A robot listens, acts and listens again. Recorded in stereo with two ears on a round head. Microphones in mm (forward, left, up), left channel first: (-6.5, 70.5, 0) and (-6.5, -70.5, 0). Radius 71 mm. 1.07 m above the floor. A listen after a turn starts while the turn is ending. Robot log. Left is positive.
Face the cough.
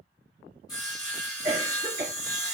note: The cough: about 40° right or 140° right.
cmd yaw -40
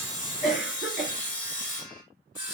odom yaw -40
end: Found it: a cough, straight ahead, 1 to 2 m away.